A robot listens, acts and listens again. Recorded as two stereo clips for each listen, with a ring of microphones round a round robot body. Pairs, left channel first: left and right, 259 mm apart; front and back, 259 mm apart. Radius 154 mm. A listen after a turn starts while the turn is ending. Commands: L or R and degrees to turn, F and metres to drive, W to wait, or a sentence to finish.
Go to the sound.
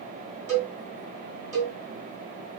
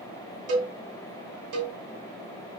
R155
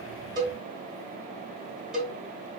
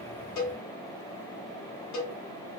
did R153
F1.0
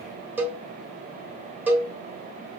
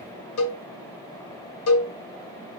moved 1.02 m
F1.0
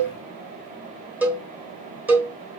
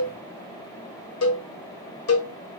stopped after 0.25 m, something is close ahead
Arrived at the cowbell, straight ahead.